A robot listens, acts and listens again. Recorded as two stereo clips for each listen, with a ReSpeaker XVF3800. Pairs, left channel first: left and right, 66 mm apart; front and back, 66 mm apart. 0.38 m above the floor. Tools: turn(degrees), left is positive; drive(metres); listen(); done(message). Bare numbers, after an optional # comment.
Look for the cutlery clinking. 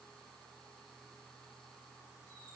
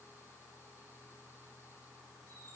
listen()
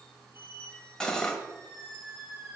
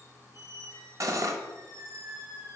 # The cutlery clinking: 165° left.
turn(165)
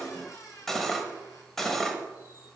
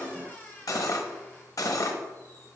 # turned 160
done("Found it: cutlery clinking, straight ahead.")